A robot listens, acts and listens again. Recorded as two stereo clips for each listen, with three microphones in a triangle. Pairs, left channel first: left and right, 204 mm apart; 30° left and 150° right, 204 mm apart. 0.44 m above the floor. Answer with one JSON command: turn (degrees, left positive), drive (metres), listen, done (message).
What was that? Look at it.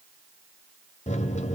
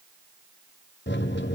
{"turn": 40}
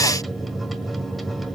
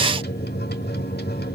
{"done": "Found it: a microwave, straight ahead, 1 to 2 m away."}